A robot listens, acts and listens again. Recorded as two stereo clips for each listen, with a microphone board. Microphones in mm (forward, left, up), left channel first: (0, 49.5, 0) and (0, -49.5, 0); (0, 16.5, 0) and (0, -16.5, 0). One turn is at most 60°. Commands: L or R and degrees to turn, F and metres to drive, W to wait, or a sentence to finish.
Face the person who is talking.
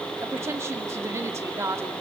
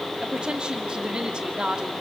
R30
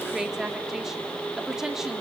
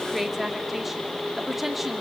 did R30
Facing the woman speaking, 1 to 2 m away.